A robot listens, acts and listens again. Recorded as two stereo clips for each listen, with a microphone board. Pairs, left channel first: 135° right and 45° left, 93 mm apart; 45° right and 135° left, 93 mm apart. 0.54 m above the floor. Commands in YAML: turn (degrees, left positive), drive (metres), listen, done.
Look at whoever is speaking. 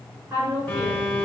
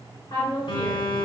turn: -15
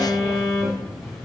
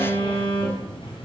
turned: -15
listen: true
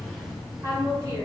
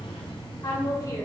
done: "Found it: a woman speaking, straight ahead."